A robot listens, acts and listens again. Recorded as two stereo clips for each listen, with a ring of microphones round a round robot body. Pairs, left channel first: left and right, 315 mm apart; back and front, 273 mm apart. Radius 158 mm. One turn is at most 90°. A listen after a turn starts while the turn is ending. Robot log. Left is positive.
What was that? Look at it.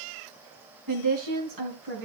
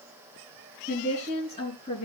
note: The woman speaking: 115° right.
cmd yaw -90
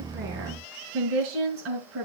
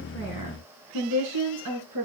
note: The woman speaking is now 40° right.
cmd yaw -40
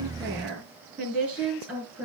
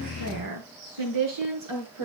end: Facing the woman speaking.